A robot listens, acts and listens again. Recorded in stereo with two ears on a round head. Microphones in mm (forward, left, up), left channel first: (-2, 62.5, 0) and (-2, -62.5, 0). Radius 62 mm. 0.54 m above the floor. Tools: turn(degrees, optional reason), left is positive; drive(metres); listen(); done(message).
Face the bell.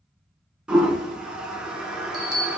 turn(degrees=-35, reason="The bell: about 35° right or 145° right.")
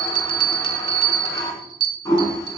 turn(degrees=-110, reason="So it is at 110° right.")
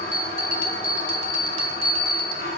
turn(degrees=-45, reason="The bell is now 45° right.")
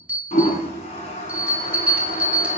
turn(degrees=-10, reason="The bell is now 10° right.")
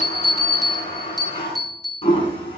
done("Found it: a bell, straight ahead, 1 to 2 m away.")